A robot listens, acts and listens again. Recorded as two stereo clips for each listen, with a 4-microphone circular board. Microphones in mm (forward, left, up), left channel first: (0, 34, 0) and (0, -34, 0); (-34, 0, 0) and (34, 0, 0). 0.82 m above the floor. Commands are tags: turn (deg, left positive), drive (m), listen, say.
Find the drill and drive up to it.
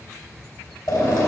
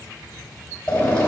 <turn deg="110"/>
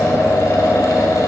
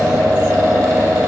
<turn deg="40"/>
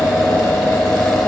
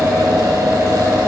<turn deg="10"/>
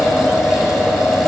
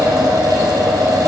<drive m="1.0"/>
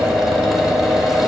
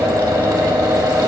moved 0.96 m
<drive m="1.0"/>
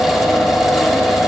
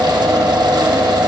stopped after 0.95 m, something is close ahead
<say>Arrived at the drill, straight ahead.</say>